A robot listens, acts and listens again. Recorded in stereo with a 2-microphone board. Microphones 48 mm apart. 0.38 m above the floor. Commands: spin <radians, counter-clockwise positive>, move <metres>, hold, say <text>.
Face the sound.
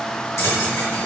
spin 1.22
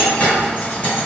spin 0.52
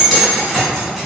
say Found it: keys jangling, straight ahead.